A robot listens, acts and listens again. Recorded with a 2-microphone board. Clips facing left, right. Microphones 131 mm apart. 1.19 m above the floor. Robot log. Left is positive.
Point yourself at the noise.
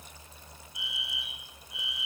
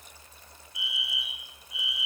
cmd yaw +30
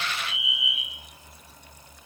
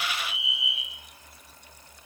note: So it is at 30° right.
cmd yaw -30
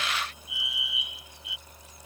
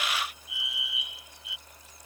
end: Found it: a fire alarm, straight ahead.